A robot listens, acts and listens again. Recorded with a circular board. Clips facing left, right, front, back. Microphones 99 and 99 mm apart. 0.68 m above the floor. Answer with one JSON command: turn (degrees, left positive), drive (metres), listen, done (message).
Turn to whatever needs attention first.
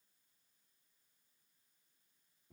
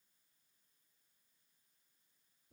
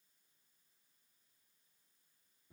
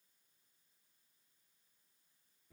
{"listen": true}
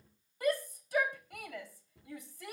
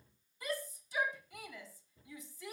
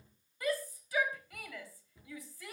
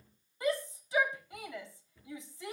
{"turn": 115}
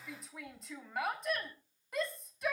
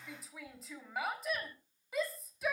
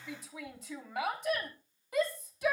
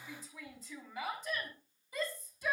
{"done": "Found it: a shout, straight ahead."}